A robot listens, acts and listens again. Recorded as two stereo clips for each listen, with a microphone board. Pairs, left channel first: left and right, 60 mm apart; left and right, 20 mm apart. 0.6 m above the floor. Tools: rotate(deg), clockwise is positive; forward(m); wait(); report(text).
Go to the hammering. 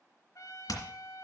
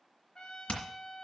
rotate(-90)
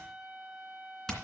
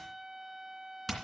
forward(1.0)
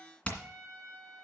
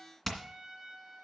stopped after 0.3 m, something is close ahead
rotate(-20)
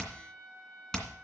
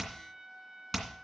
report("Blocked. The hammering is further on, straight ahead.")